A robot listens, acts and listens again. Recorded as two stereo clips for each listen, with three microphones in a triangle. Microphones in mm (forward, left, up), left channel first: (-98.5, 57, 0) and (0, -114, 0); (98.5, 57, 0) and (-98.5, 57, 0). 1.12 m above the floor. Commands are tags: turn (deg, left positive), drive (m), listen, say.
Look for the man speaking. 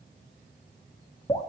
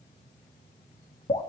<listen/>
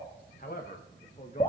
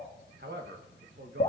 <turn deg="170"/>
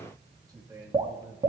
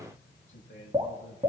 <turn deg="15"/>
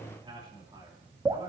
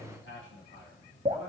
<say>Facing the man speaking.</say>